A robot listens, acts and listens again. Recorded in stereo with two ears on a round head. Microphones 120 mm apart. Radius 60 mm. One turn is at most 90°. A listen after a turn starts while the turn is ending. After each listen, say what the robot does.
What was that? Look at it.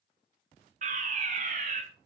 Turn 55° right.
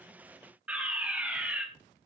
Turn 10° right.
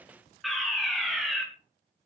Facing the fire alarm.